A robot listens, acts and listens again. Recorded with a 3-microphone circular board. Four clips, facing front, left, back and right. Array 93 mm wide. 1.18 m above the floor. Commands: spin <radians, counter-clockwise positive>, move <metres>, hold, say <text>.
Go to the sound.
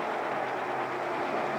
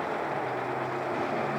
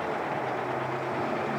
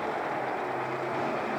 hold
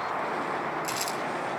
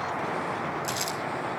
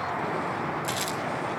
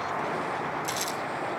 spin 2.44
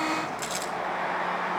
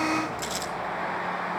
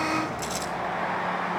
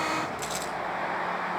spin 0.17
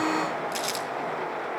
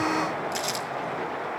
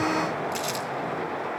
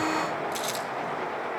move 1.0
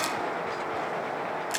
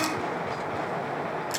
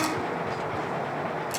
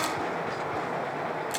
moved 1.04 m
move 1.0
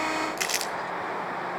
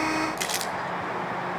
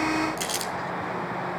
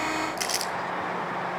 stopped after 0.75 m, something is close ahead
spin 0.35
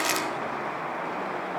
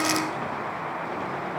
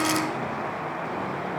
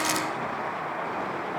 spin 0.17
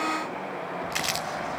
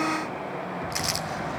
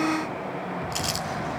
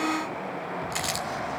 say I am next to the crumpling.